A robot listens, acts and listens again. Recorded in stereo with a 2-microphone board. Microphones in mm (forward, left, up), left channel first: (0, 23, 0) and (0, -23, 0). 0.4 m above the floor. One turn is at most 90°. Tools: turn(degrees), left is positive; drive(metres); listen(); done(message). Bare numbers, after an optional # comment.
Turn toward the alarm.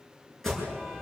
turn(30)
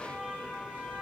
# So it is at 145° left.
turn(90)
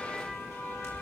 # The alarm is now 85° left.
turn(85)
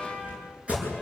# The alarm is now 30° right.
turn(-30)
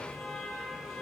done("Found it: an alarm, straight ahead.")